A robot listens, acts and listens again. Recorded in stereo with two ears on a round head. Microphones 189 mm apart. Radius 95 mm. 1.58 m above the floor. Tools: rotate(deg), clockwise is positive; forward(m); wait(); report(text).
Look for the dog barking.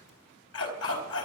rotate(-70)
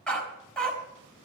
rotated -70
report("Facing the dog barking.")